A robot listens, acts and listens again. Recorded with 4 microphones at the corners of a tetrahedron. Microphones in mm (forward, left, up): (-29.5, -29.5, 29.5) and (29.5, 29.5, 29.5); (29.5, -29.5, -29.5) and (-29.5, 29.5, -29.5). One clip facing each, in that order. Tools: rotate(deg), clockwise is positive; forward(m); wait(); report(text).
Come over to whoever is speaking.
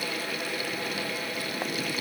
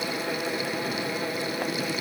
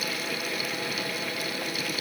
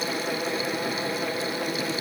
wait()
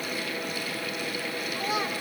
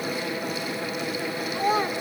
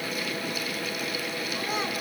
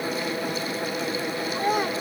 rotate(-100)
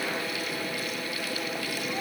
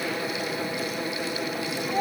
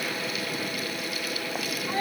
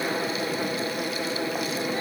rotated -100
forward(1.0)
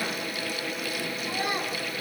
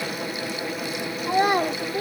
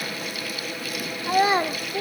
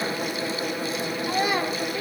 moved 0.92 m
rotate(-15)
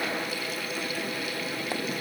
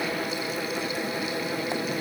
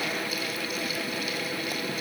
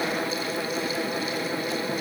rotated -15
wait()
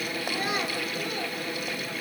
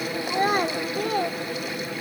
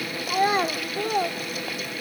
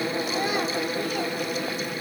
forward(1.0)
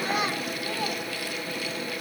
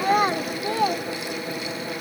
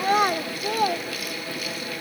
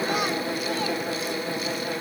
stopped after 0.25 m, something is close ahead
report("I am next to the child speaking.")